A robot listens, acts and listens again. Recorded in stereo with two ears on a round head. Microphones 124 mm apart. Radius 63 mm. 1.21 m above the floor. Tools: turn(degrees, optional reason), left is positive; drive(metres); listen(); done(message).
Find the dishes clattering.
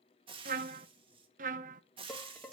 turn(degrees=30)
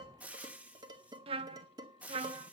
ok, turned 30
turn(degrees=-30, reason="So it is at 30° right.")
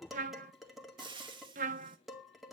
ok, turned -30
done("Facing the dishes clattering, 2 to 4 m away.")